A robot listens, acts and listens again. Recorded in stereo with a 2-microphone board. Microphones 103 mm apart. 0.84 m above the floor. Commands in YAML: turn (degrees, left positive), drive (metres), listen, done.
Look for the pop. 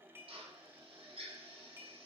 listen: true
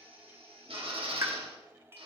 turn: -30
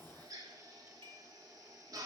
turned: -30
listen: true
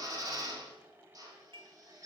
done: "I heard a pop, but can't make it out now. It was about straight ahead or 120° right."